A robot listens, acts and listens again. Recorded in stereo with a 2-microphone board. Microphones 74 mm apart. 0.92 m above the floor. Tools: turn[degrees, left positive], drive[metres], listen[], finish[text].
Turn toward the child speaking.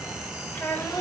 Thought: The child speaking: about 30° left or 150° left.
Action: turn[30]
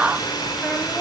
Action: listen[]
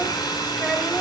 Action: listen[]
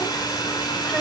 Action: finish[I heard a child speaking, but can't make it out now. It was about straight ahead or 120° left.]